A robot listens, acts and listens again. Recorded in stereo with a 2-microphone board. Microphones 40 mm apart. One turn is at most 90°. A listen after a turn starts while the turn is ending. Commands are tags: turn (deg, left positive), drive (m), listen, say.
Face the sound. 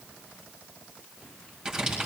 <turn deg="-30"/>
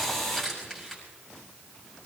<turn deg="15"/>
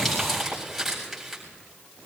<say>Found it: crumpling, straight ahead, over 4 m away.</say>